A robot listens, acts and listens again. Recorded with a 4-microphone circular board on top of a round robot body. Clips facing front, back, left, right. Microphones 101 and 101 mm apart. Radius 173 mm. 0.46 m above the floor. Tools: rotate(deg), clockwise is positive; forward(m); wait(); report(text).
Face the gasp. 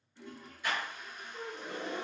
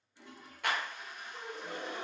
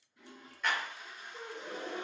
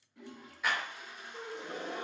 rotate(140)
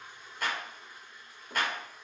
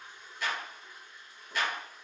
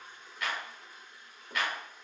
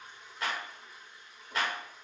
report("Facing where the gasp came from. I can't hear it now.")